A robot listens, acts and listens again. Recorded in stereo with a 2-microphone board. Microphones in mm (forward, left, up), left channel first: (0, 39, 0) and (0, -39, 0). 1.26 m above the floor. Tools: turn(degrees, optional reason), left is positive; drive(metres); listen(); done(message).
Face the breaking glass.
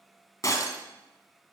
turn(degrees=40, reason="The breaking glass: about 40° left or 140° left.")
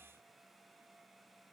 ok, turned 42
listen()
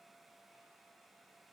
done("I heard breaking glass, but can't make it out now. It was about straight ahead or 95° left.")